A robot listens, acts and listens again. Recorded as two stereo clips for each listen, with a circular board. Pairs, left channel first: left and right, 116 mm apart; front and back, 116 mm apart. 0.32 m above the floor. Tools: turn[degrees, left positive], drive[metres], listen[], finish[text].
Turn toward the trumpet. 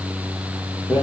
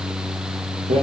Action: listen[]
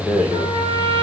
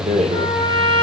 Thought: The trumpet: 135° right.
Action: turn[-135]
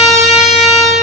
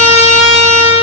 Action: finish[Found it: a trumpet, straight ahead, 2 to 4 m away.]